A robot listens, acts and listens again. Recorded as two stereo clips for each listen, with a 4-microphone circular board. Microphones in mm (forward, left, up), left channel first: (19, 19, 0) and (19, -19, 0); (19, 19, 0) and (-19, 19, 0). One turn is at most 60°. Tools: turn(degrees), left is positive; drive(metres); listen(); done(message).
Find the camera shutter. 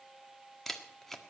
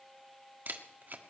turn(degrees=60)
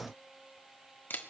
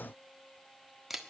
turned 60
turn(degrees=60)
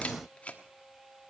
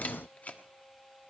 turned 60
turn(degrees=40)
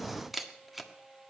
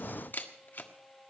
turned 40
done("Facing the camera shutter.")